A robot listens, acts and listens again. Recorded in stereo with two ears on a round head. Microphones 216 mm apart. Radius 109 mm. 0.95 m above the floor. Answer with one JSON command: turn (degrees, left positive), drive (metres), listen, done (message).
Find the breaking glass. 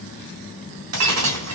{"turn": -90}
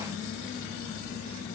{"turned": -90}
{"done": "I heard breaking glass from this way, but can't make it out now."}